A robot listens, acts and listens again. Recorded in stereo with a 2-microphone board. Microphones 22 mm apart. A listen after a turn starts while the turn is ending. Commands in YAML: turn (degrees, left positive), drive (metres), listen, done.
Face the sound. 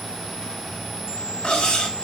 turn: 60
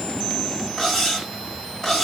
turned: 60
turn: 20
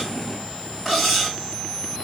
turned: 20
done: "Facing the cutlery clinking, 1 to 2 m away."